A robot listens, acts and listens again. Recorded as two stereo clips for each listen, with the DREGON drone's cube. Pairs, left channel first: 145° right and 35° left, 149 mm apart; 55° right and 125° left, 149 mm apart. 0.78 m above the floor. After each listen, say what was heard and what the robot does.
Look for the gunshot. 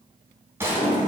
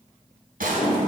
The gunshot: 110° left. Turn 110° left.
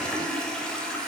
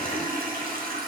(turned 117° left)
Nothing new. It was at 10° right. Turn 10° right.
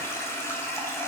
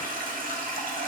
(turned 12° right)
Facing where the gunshot came from. I can't hear it now.